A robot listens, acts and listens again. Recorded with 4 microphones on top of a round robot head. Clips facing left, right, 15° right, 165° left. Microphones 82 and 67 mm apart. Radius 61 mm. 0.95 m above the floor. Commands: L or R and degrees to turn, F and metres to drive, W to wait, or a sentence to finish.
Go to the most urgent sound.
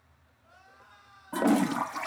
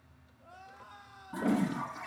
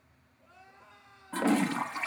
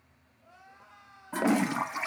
R115
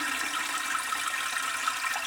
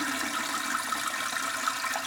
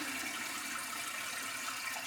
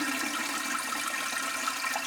W
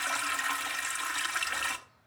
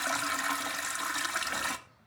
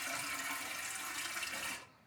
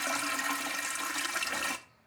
W
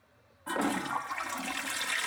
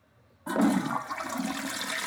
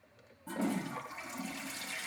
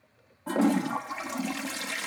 I heard crying from this way, but can't make it out now. I did not reach it.